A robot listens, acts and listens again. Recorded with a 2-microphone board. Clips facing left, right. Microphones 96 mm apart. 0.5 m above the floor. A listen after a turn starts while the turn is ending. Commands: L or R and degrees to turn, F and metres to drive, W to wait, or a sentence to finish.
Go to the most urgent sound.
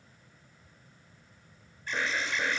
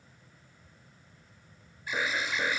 R30
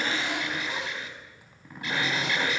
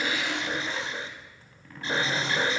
R145
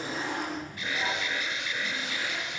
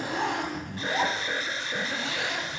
R40
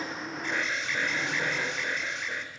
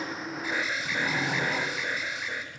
F1.0
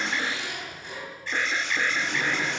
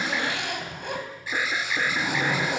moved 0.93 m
R10
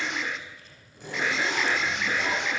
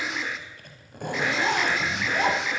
F1.0
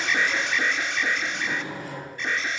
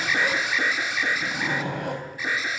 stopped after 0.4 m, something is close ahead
R10
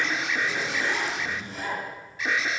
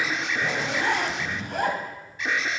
I am next to the alarm.